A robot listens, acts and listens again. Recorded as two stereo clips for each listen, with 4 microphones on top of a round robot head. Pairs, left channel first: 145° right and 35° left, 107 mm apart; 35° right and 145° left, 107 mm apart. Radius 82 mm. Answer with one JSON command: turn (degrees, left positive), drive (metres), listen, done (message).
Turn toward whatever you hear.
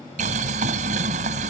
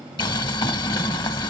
{"turn": 15}
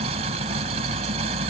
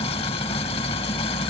{"done": "Found it: boiling, straight ahead."}